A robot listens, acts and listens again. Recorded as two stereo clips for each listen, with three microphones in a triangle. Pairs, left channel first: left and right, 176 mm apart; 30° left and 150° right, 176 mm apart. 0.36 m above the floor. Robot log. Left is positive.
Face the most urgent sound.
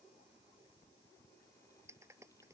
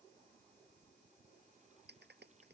cmd idle
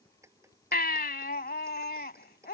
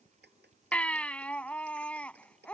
note: The baby crying: 110° left.
cmd yaw +110
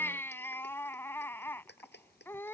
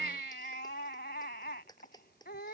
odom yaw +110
note: The baby crying is now 15° left.
cmd yaw +15
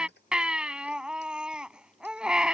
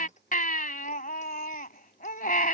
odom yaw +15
end: Found it: a baby crying, straight ahead.